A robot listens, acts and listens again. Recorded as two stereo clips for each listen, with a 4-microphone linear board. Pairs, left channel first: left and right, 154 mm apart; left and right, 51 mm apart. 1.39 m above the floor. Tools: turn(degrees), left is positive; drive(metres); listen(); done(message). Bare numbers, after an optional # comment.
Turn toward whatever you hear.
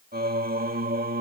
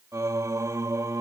turn(-90)
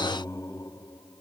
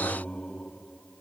# So it is at 25° left.
turn(25)
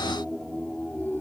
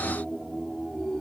# The singing is now 15° left.
turn(15)
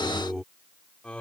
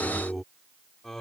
# The singing is now 10° left.
turn(10)
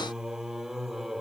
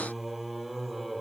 done("Found it: singing, straight ahead.")